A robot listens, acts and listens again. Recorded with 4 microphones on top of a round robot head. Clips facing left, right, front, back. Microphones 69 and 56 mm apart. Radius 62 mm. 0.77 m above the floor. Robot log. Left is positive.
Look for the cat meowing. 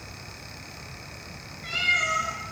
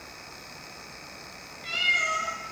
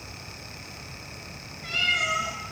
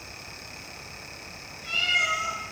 note: The cat meowing: 30° left.
cmd yaw +30
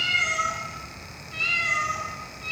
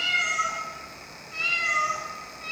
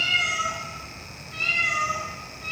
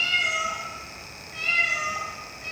note: The cat meowing is now 20° right.
cmd yaw -20
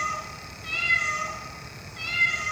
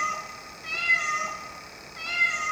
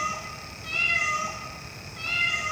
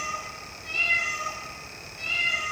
note: The cat meowing is now 30° right.
cmd yaw -30
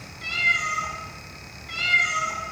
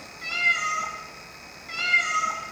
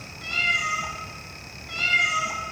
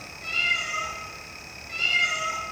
note: The cat meowing is now 20° right.
cmd yaw -20
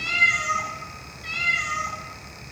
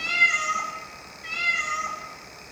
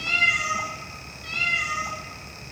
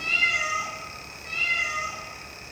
end: Found it: a cat meowing, straight ahead, 2 to 4 m away.